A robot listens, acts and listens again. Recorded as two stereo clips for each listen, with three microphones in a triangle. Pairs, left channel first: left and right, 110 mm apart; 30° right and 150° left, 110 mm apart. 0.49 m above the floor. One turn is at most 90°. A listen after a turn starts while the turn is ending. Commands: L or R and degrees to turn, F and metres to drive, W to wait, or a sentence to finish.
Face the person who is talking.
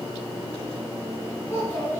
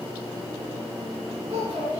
L90
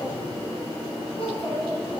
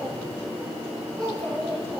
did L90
L60
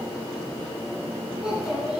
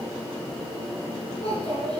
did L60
Facing the child speaking.